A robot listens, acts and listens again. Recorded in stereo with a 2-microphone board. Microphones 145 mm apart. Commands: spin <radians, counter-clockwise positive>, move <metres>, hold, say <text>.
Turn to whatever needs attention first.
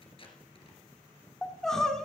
spin 0.52
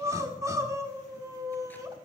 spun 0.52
spin -0.44
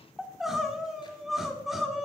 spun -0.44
say Found it: crying, straight ahead.